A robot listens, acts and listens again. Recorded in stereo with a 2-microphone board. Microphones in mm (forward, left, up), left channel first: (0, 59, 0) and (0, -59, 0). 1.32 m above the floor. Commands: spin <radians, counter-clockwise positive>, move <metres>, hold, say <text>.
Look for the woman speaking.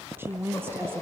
spin -0.35
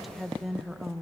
say Facing the woman speaking, 1 to 2 m away.